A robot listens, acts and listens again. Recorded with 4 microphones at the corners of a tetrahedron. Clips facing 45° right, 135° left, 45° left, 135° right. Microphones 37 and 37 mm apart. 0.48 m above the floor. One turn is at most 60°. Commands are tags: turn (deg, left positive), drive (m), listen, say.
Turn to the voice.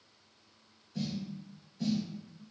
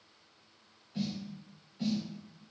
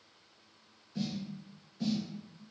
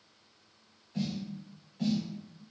<listen/>
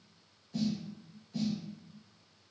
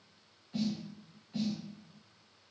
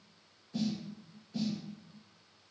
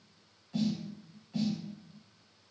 <listen/>
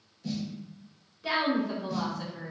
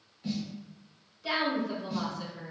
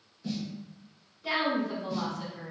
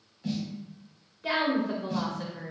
<turn deg="-60"/>
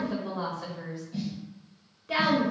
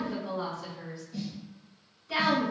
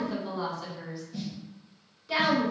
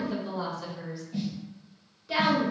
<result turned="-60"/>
<turn deg="-45"/>
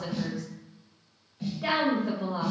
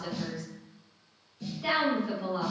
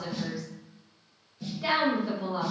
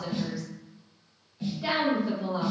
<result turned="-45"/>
<turn deg="-30"/>
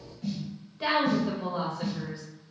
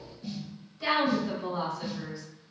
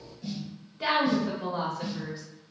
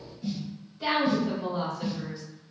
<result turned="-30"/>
<say>Facing the woman speaking.</say>